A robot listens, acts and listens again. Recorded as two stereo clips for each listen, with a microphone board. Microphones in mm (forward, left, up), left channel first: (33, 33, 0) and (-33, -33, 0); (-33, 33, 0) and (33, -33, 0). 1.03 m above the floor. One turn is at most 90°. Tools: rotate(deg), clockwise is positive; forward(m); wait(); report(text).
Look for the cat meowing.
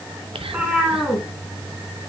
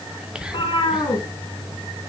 rotate(-90)
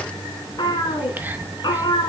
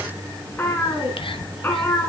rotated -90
rotate(-70)
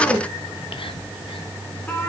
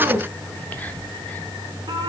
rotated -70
rotate(25)
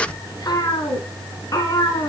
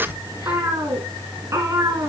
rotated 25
report("Found it: a cat meowing, straight ahead.")